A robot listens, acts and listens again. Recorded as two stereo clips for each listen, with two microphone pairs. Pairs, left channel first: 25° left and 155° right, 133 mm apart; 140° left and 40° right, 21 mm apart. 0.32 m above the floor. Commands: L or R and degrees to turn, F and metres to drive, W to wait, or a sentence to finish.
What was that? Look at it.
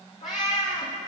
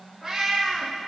L65
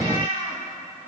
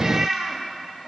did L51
L15
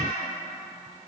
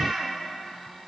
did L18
Found it: a cat meowing, straight ahead.